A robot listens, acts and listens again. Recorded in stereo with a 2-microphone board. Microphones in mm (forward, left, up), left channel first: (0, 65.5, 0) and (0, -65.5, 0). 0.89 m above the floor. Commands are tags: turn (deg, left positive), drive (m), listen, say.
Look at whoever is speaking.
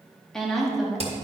<turn deg="-30"/>
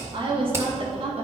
<turn deg="-130"/>
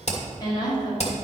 <turn deg="35"/>
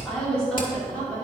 <turn deg="10"/>
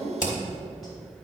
<say>Facing the woman speaking, 2 to 4 m away.</say>